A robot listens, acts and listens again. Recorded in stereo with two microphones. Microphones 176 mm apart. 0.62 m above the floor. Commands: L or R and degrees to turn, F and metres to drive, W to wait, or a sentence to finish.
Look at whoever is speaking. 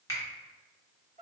W
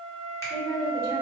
R35
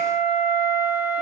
W
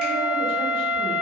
W
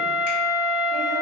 I heard a woman speaking, but can't make it out now. It was about straight ahead or 110° right.